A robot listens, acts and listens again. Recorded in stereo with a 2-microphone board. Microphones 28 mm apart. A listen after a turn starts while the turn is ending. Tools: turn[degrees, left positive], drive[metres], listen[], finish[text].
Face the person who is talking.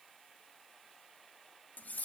Action: listen[]
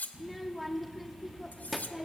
Action: turn[30]
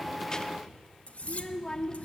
Thought: So it is at 150° left.
Action: turn[150]
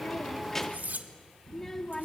Thought: The child speaking is now 10° left.
Action: turn[10]
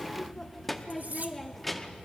Action: finish[Found it: a child speaking, straight ahead, under 1 m away.]